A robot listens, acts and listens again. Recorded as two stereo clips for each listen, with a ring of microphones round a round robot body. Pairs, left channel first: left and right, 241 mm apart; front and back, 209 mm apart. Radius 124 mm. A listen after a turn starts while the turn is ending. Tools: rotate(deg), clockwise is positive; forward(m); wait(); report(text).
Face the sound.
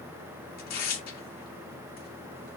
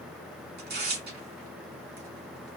rotate(-140)
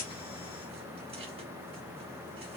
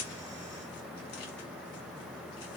wait()
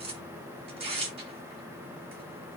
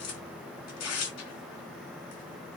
rotate(25)
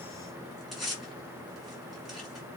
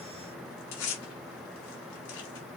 report("Facing the tearing paper, 1 to 2 m away.")